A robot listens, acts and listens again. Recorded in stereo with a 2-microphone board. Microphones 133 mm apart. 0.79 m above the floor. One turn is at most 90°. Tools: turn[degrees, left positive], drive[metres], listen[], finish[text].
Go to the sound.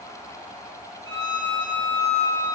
Thought: The violin: about 25° left or 155° left.
Action: turn[25]
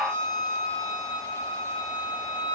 Thought: So it is at 130° left.
Action: turn[90]
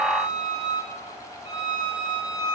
Thought: The violin is now 50° left.
Action: turn[50]
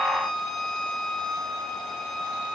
Action: drive[1.0]
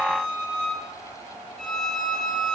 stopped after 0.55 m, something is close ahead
Action: finish[Something is in my way. I am facing the violin but have not reached it.]